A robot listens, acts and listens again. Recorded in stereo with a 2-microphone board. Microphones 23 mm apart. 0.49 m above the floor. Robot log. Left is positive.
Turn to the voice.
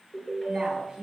note: The woman speaking: about 40° right or 140° right.
cmd yaw -40
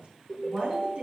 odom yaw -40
note: So it is at 100° right.
cmd yaw -100
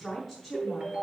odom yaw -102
end: Facing the woman speaking.